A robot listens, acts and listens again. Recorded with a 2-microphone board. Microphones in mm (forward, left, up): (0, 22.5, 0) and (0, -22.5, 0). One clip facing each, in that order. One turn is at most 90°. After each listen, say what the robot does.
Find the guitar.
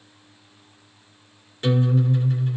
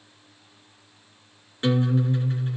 Turn 30° right.
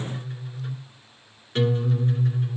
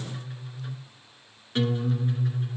Found it: a guitar, straight ahead, 2 to 4 m away.